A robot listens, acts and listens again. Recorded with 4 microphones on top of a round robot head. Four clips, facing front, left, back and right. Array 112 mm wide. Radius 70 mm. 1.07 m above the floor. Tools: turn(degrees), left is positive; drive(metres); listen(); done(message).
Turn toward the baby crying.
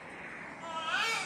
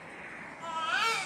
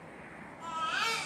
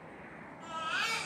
turn(degrees=90)
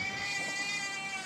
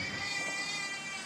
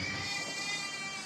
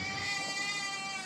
turn(degrees=-15)
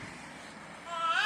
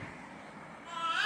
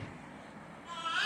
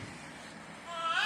done("Found it: a baby crying, straight ahead, over 4 m away.")